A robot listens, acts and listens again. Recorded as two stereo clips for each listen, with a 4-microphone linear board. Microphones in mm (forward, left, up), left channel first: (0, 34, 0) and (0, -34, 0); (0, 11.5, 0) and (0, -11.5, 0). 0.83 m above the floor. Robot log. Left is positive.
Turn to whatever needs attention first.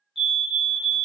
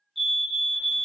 cmd yaw -30
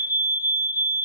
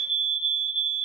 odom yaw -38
note: So it is at 130° right.
cmd yaw -130
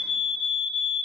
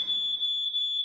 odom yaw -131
end: Found it: a fire alarm, straight ahead, 2 to 4 m away.